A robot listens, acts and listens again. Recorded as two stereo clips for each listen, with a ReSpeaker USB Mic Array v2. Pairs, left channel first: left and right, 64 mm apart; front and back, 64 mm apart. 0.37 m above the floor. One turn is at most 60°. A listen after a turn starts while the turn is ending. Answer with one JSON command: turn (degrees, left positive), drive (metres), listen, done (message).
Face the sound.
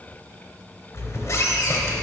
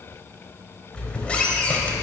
{"turn": 60}
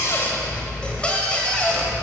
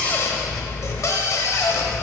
{"turn": 25}
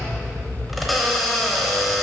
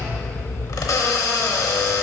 {"done": "Found it: a squeak, straight ahead, under 1 m away."}